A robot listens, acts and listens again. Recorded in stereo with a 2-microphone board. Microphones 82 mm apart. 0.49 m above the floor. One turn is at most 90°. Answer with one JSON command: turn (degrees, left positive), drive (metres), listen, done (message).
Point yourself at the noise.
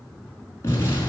{"turn": 35}
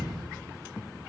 {"done": "Found it: an explosion, straight ahead, over 4 m away."}